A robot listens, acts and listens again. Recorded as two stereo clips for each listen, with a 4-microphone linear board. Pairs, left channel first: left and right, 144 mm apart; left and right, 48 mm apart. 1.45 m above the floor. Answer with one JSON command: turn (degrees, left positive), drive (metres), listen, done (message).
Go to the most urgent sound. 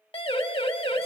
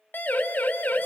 {"turn": 40}
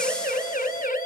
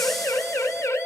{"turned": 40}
{"turn": 100}
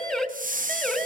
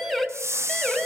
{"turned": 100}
{"drive": 1.0}
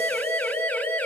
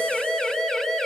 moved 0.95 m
{"turn": 15}
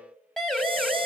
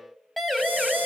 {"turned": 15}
{"drive": 1.0}
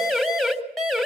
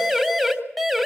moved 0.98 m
{"drive": 1.0}
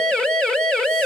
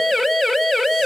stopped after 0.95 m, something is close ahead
{"done": "Arrived at the siren, straight ahead."}